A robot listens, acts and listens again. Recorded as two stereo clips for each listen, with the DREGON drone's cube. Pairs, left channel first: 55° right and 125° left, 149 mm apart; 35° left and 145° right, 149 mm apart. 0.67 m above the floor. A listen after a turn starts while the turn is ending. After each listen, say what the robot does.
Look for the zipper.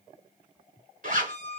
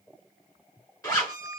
Turn 105° left.
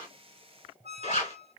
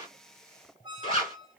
Turn 15° right.
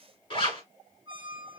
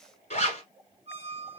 Facing the zipper.